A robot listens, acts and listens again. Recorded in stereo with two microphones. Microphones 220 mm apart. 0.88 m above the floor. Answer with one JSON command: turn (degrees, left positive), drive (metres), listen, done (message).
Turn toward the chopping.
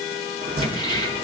{"turn": -45}
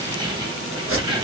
{"turn": -90}
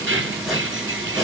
{"done": "Facing the chopping."}